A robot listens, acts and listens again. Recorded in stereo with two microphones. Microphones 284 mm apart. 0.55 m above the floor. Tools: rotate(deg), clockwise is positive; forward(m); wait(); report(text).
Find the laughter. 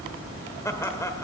rotate(-30)
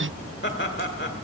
rotate(-135)
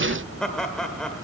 report("Found it: laughter, straight ahead, 1 to 2 m away.")